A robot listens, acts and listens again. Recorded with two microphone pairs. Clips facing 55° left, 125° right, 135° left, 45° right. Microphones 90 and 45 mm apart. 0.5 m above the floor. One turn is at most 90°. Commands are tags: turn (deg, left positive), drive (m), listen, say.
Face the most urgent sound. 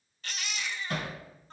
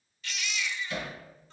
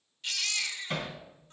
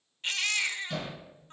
<say>Found it: a baby crying, straight ahead.</say>